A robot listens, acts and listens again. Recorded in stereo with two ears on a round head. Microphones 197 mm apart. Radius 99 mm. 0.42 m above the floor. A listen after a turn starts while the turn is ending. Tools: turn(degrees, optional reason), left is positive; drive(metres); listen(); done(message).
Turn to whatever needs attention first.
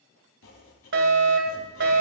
turn(degrees=-55, reason="The fire alarm: about 55° right or 125° right.")
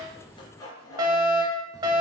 turn(degrees=-25, reason="So it is at 25° right.")
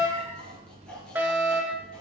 turn(degrees=-15, reason="The fire alarm is now 15° right.")
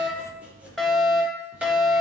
done("Found it: a fire alarm, straight ahead, 2 to 4 m away.")